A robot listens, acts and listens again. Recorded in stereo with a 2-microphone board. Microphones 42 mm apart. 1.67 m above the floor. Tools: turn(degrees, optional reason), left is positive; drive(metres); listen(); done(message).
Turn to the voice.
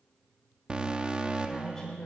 turn(degrees=15, reason="The woman speaking: about 15° left or 165° left.")
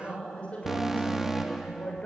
turn(degrees=150, reason="So it is at 150° left.")
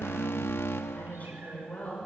turn(degrees=40, reason="The woman speaking is now 40° left.")
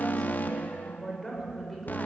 done("Facing the woman speaking.")